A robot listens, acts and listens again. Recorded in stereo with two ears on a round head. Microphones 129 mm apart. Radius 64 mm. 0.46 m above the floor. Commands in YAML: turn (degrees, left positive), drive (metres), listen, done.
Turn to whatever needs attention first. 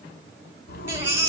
turn: -15
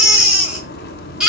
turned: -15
done: "Found it: a baby crying, straight ahead."